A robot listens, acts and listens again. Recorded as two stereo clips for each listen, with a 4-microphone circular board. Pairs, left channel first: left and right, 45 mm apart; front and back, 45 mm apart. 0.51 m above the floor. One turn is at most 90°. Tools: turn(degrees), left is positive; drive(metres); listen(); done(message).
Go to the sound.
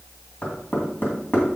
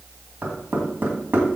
turn(degrees=90)
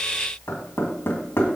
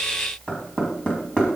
turn(degrees=70)
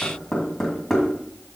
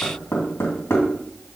drive(metres=1.0)
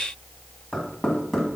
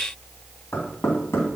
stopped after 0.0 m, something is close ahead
done("Something is in my way. I am facing the knocking but have not reached it.")